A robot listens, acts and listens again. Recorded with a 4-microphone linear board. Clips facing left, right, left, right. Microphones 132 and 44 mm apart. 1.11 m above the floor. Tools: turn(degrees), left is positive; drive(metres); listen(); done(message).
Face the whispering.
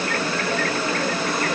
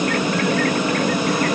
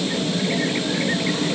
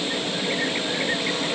listen()
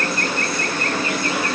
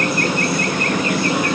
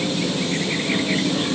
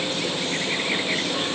listen()
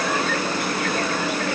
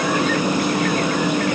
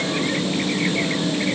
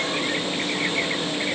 done("I can't make out whispering to turn to.")